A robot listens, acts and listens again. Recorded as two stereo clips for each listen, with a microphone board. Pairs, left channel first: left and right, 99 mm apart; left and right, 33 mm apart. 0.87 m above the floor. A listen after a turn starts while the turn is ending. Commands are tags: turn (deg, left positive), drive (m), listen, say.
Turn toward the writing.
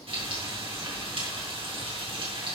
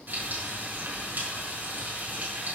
<listen/>
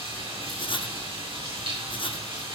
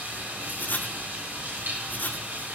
<turn deg="60"/>
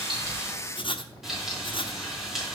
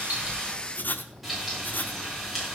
<turn deg="55"/>
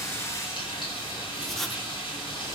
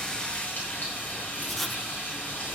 <say>Facing the writing, under 1 m away.</say>